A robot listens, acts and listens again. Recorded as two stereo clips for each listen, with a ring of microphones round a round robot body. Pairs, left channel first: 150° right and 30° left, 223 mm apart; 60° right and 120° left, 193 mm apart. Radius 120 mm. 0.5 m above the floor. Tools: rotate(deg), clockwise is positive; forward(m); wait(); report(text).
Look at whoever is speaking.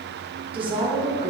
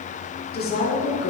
rotate(35)
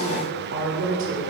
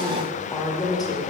rotate(-10)
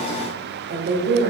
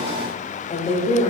report("Facing the woman speaking.")